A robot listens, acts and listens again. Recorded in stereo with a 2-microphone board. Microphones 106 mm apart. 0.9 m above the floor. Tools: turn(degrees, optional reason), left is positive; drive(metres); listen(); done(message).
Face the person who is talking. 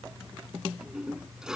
listen()
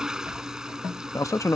turn(degrees=30, reason="The man speaking: about 30° left or 150° left.")
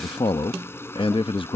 turn(degrees=115, reason="So it is at 115° left.")
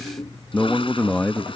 turn(degrees=15, reason="The man speaking is now 15° left.")
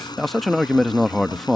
done("Found it: a man speaking, straight ahead.")